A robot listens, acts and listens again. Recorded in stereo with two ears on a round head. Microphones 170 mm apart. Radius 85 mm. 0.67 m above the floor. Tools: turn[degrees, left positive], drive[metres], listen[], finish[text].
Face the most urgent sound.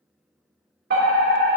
Thought: The fire alarm: about 55° right or 125° right.
Action: turn[-55]
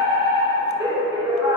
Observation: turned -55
Thought: So it is at 25° right.
Action: turn[-25]
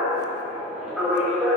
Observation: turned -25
Action: finish[Found it: a fire alarm, straight ahead, 2 to 4 m away.]